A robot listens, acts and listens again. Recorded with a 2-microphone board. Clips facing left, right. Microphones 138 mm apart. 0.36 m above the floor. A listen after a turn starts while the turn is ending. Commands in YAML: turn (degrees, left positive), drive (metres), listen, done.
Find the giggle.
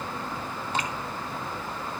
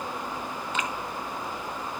listen: true
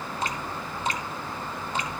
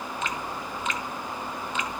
listen: true
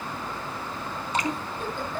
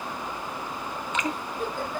turn: -40
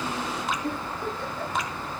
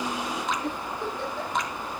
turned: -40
turn: -100
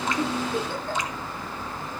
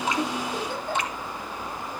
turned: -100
turn: -10
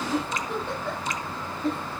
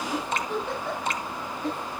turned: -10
done: "Found it: a giggle, straight ahead."